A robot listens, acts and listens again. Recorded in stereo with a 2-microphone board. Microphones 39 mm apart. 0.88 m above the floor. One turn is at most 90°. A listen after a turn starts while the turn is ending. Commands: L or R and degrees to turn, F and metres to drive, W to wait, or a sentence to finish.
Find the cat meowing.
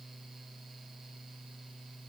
W
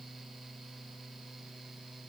W
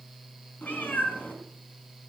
L45
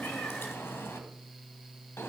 L90
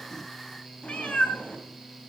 L30
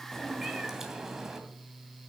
R10
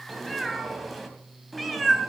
Facing the cat meowing, 2 to 4 m away.